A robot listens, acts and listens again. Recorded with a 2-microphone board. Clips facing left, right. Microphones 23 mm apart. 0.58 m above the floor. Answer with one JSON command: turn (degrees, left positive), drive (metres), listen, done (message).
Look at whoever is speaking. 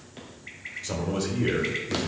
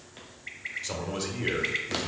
{"turn": -30}
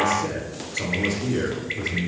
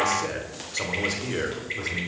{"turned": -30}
{"turn": -140}
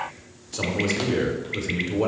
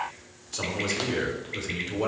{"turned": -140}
{"done": "Facing the man speaking."}